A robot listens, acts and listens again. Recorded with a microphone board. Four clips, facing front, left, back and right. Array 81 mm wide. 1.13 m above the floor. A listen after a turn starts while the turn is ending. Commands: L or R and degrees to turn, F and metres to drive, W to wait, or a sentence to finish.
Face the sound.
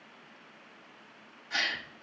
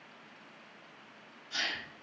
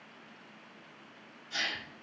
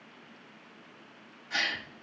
R45
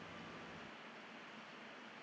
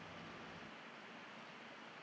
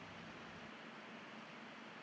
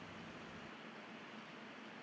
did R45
I heard a gasp from this way, but can't make it out now.